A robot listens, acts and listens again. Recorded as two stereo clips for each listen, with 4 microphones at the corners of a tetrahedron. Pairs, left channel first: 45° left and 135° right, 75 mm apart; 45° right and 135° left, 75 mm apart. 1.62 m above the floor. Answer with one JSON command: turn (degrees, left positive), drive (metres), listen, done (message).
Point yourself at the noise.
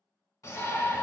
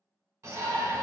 {"turn": 80}
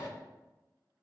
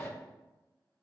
{"done": "Found it: a shout, straight ahead."}